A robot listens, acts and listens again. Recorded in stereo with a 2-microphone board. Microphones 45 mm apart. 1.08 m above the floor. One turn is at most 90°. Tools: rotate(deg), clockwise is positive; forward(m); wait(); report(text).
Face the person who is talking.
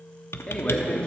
rotate(-25)
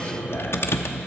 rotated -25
wait()
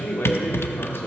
rotate(-90)
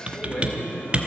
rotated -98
rotate(-25)
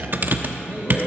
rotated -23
wait()
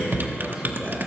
report("Facing where the man speaking came from. I can't hear it now.")